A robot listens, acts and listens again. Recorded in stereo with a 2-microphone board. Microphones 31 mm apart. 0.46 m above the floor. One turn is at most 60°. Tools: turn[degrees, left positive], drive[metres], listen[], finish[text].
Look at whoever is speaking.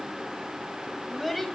Action: turn[30]
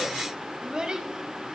Thought: So it is at 30° right.
Action: turn[-30]
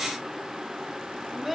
Thought: The child speaking is now 10° right.
Action: turn[-10]
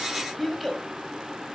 Action: finish[Found it: a child speaking, straight ahead.]